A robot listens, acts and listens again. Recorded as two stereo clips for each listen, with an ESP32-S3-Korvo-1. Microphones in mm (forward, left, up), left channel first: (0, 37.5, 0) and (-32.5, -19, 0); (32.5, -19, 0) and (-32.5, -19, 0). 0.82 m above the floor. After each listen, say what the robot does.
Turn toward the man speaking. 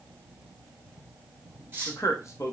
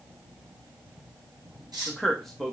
Turn 90° left.
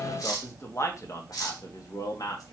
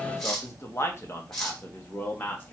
Turn 60° left.
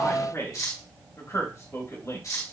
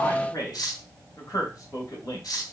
Turn 15° left.
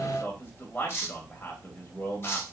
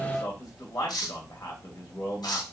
Found it: a man speaking, straight ahead.